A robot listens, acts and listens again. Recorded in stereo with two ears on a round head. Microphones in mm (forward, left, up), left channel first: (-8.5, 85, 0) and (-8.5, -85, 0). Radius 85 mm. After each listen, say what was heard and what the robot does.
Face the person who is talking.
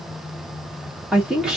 Turn 30° right.
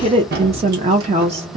So it is at 145° right. Turn 145° right.
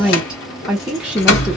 Found it: a woman speaking, straight ahead, under 1 m away.